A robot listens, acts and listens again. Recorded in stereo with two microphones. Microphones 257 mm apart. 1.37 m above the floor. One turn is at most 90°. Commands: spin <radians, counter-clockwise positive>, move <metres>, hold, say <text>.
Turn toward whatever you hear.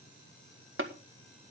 spin -0.96
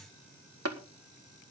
spin -1.22
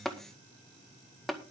say Found it: tapping, straight ahead.